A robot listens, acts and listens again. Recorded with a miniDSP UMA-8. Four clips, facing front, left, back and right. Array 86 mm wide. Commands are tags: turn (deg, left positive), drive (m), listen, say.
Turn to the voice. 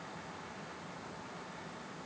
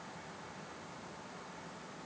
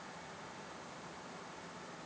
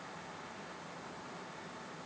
<listen/>
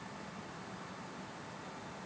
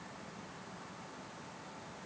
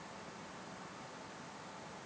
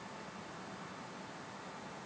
<listen/>
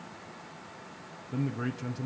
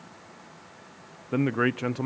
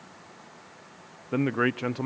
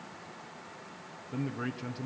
<turn deg="135"/>
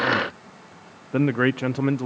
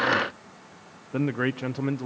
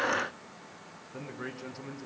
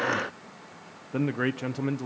<turn deg="10"/>
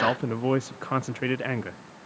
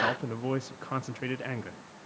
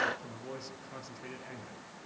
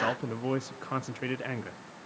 <say>Found it: a man speaking, straight ahead, under 1 m away.</say>